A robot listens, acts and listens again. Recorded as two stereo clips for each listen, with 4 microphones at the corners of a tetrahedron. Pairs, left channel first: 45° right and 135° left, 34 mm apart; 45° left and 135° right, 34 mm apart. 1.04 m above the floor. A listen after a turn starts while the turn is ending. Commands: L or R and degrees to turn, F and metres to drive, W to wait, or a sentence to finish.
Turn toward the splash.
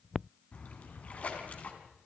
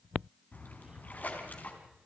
Found it: a splash, straight ahead.